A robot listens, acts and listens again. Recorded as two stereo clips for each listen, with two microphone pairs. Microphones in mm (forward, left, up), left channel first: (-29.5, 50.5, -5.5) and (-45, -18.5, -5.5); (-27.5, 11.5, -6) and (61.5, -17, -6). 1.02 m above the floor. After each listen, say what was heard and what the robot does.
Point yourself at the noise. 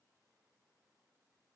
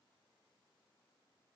Keep listening.
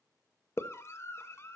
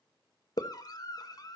The scream: 125° left. Turn 125° left.
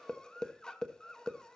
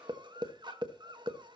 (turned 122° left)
Found it: a scream, straight ahead.